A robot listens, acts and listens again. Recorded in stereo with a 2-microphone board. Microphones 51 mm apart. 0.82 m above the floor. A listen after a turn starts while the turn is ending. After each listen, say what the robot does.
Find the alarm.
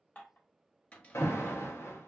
Turn 70° left.
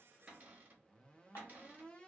Keep listening.
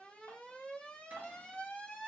Turn 25° left.
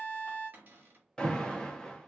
Turn 20° left.
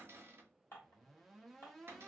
Keep listening.
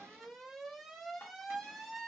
Facing the alarm.